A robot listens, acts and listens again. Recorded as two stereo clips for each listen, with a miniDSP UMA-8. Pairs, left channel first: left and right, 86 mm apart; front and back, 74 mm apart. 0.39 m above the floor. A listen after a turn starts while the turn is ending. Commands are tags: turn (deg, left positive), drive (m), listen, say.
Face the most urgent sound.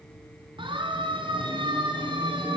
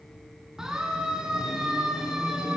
<turn deg="-100"/>
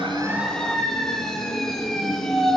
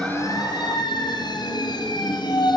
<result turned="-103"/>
<say>Facing the siren.</say>